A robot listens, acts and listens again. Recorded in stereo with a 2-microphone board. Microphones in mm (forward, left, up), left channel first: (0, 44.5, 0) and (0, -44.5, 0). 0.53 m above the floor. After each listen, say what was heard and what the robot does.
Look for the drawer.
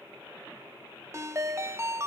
Keep listening.
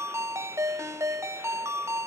Keep listening.
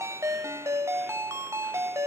I can't make out a drawer, only a ringtone.